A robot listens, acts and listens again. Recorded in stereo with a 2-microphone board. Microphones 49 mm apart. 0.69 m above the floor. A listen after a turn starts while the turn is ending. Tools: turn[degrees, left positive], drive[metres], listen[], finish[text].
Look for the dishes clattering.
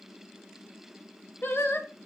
Action: listen[]
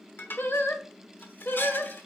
Thought: The dishes clattering: about 45° left or 135° left.
Action: turn[45]
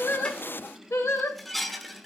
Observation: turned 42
Action: finish[Found it: dishes clattering, straight ahead.]